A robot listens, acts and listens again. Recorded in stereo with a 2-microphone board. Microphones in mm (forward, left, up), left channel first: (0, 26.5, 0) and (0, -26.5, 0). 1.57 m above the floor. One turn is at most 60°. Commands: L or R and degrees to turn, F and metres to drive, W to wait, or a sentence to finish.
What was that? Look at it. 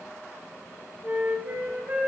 R35
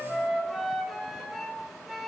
Facing the flute, 2 to 4 m away.